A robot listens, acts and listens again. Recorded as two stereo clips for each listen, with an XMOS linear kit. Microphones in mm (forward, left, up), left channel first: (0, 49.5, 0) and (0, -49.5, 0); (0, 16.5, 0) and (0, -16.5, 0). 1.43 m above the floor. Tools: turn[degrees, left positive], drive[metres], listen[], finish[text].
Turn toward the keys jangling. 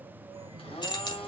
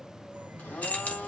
Thought: The keys jangling: about 50° left or 130° left.
Action: turn[50]
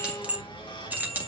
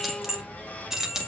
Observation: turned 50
Thought: So it is at 20° right.
Action: turn[-20]
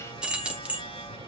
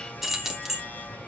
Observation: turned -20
Thought: The keys jangling is now 10° right.
Action: turn[-10]
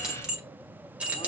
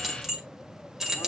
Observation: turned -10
Thought: The keys jangling is now 15° right.
Action: turn[-15]
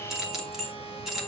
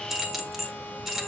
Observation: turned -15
Action: finish[Found it: keys jangling, straight ahead.]